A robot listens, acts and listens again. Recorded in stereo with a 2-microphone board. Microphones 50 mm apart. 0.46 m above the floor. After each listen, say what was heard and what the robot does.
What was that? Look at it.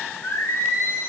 The singing: about 50° left or 130° left. Turn 50° left.
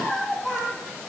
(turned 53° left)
Facing the singing.